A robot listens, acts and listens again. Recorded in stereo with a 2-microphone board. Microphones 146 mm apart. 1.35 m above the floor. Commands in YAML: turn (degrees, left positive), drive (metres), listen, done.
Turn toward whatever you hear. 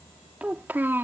turn: -15
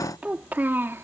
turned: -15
turn: -15
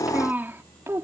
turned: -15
turn: -20
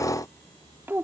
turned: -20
turn: -15
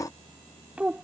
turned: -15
turn: -30
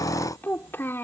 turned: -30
turn: 15
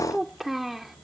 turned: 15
done: "Found it: a child speaking, straight ahead."